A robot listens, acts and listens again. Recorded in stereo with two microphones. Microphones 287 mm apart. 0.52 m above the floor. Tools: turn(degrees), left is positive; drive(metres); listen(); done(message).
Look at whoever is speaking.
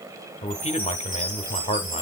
turn(degrees=25)
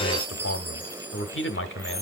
turn(degrees=125)
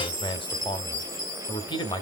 turn(degrees=20)
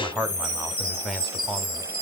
done("Facing the man speaking, 1 to 2 m away.")